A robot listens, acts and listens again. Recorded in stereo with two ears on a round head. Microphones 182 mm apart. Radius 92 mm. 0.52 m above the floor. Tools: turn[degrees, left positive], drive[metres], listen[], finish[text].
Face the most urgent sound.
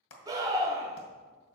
Thought: The scream: about 20° right or 160° right.
Action: turn[-20]
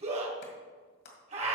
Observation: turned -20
Thought: So it is at 140° right.
Action: turn[-140]
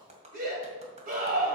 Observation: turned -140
Thought: The scream is now 45° right.
Action: turn[-45]
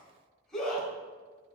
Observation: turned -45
Action: finish[Facing the scream, 2 to 4 m away.]